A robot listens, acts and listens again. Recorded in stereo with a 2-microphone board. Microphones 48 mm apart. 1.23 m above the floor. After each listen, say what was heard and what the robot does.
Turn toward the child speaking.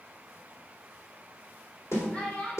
The child speaking: about 25° left or 155° left. Turn 25° left.
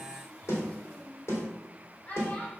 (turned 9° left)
The child speaking: about 30° left or 150° left. Turn 30° left.
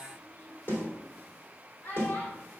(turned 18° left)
So it is at 130° left. Turn 130° left.
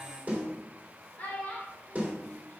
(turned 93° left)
The child speaking is now 40° left. Turn 40° left.
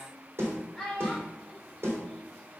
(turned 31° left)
The child speaking is now 10° left. Turn 10° left.
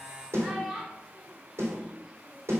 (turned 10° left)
Facing the child speaking.